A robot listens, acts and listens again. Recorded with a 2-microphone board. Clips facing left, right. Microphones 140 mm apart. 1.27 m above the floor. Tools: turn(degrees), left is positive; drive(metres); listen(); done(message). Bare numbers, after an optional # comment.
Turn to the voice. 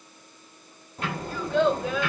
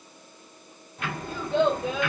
# The child speaking: about 25° right or 155° right.
turn(-25)
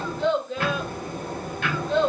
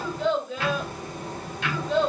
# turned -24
done("Found it: a child speaking, straight ahead, 1 to 2 m away.")